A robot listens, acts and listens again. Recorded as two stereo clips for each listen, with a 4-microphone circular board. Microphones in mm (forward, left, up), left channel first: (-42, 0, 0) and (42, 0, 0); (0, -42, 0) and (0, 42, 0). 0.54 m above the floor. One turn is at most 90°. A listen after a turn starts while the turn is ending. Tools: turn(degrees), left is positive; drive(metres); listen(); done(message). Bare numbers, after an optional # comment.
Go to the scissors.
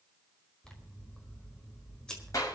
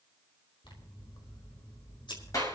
# The scissors: 100° right.
turn(-90)
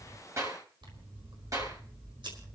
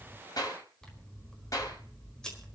# The scissors is now 10° right.
turn(-10)
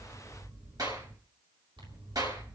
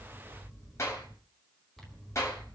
drive(1.0)
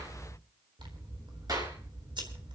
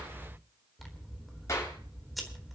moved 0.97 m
drive(1.0)
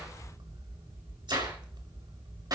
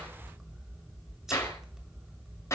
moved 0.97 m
drive(1.0)
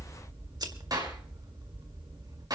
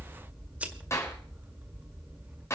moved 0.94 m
# The scissors is now 20° left.
turn(20)
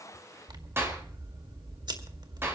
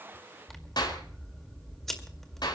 drive(1.0)
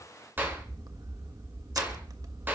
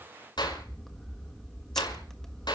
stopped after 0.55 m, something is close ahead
done("Arrived at the scissors, straight ahead.")